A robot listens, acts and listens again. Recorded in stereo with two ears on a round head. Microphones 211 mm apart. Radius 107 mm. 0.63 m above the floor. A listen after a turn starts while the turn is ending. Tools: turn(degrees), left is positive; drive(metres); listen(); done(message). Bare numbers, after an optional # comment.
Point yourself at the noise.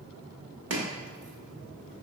# The chopping: about 50° right or 130° right.
turn(-50)
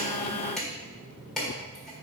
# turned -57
done("Found it: chopping, straight ahead, 1 to 2 m away.")